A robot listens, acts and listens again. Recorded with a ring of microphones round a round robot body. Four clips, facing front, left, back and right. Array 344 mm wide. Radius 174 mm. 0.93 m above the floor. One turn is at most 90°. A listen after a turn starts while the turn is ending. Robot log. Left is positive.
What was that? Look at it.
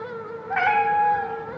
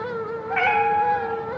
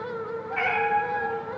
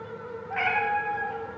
note: The cat meowing: 35° left.
cmd yaw +35
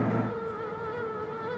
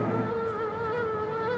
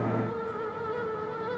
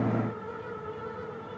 cmd idle
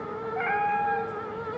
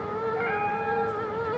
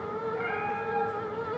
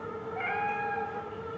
note: The cat meowing is now 15° left.
cmd yaw +15
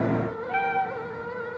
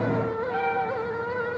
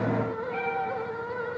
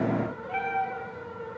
end: Found it: a cat meowing, straight ahead.